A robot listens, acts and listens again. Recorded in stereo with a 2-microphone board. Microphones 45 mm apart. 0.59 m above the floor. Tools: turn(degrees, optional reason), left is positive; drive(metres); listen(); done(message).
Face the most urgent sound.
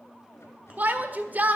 turn(degrees=-45, reason="The shout: about 45° right or 135° right.")
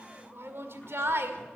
turn(degrees=-90, reason="So it is at 90° right.")
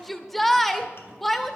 done("Found it: a shout, straight ahead, 1 to 2 m away.")